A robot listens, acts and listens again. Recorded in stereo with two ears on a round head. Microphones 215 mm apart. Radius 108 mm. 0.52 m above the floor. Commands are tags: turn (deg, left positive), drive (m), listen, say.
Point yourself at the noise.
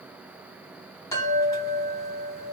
<turn deg="30"/>
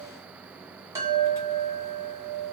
<turn deg="-15"/>
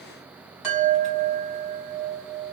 <say>Found it: a chime, straight ahead, 1 to 2 m away.</say>